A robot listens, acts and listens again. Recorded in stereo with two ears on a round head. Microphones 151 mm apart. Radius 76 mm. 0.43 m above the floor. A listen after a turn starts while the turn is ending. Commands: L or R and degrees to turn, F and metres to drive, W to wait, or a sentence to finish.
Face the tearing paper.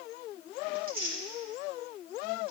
R55
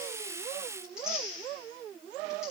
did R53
Facing the tearing paper, over 4 m away.